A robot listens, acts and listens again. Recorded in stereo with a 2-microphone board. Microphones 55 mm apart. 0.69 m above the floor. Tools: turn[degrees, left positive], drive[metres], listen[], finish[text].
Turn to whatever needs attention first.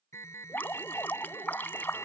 Thought: The alarm: about 65° left or 115° left.
Action: turn[65]
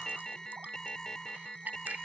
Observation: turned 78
Thought: So it is at 15° left.
Action: turn[15]
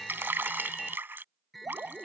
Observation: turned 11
Action: finish[Found it: an alarm, straight ahead.]